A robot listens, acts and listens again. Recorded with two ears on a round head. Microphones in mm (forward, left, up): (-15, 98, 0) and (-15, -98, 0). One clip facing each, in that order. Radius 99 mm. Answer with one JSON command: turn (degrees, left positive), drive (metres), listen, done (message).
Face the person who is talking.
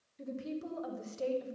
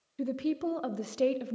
{"turn": -65}
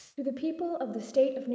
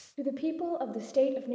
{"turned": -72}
{"done": "Facing the woman speaking, under 1 m away."}